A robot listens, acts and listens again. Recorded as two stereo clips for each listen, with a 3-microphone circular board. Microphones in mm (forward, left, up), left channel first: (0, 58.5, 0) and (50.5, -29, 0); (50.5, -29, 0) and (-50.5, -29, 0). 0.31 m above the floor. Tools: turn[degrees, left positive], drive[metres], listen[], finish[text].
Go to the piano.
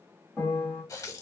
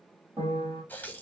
Thought: The piano: 165° right.
Action: turn[-165]
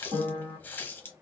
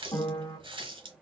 Thought: The piano is now 50° right.
Action: turn[-50]
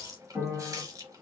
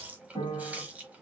Thought: The piano is now 15° left.
Action: turn[15]
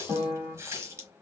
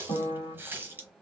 Thought: The piano is now 10° left.
Action: turn[10]
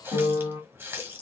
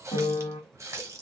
Action: drive[1.0]
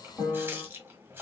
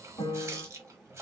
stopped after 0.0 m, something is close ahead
Action: finish[Blocked. The piano is further on, straight ahead.]